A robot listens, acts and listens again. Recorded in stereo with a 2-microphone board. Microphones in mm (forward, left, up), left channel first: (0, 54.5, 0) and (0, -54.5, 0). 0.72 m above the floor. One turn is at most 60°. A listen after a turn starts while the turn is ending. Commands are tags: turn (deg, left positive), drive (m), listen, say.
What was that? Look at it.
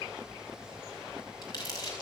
<turn deg="35"/>
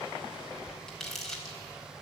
<say>Facing the crumpling.</say>